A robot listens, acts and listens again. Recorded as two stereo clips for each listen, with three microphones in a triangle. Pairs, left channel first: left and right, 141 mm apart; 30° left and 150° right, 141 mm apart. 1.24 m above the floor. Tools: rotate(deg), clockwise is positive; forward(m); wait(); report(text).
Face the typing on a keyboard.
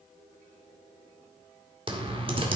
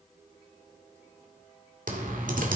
rotate(140)
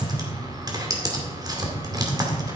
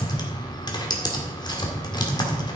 rotate(30)
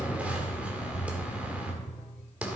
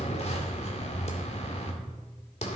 rotate(10)
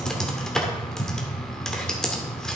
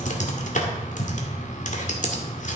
report("Found it: typing on a keyboard, straight ahead, 2 to 4 m away.")